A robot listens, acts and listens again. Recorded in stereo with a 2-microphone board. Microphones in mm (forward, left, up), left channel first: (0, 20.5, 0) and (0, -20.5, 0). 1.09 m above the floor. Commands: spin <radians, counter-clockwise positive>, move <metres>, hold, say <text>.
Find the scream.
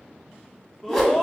spin 0.52
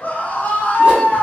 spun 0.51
spin 2.36
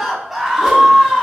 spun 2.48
say Facing the scream, under 1 m away.